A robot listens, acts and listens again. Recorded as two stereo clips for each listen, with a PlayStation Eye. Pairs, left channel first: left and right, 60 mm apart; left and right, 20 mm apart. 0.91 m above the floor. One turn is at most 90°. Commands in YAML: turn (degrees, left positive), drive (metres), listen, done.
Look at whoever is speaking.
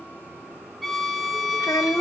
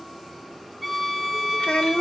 turn: 90
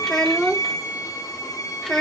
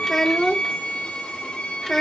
turn: 10
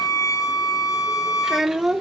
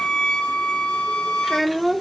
done: "Found it: a child speaking, straight ahead, 1 to 2 m away."